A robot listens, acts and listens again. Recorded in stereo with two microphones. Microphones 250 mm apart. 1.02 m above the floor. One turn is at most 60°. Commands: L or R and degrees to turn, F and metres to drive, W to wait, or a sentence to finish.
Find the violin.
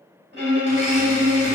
R45
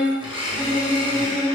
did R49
R60
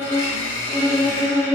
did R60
R25
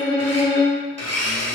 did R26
Found it: a violin, straight ahead, 1 to 2 m away.